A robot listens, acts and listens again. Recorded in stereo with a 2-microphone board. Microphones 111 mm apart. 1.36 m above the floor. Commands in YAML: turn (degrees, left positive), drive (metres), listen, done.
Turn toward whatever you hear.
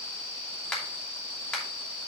turn: 30
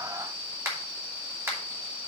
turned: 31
turn: -25
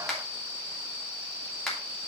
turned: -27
done: "Facing the finger snap."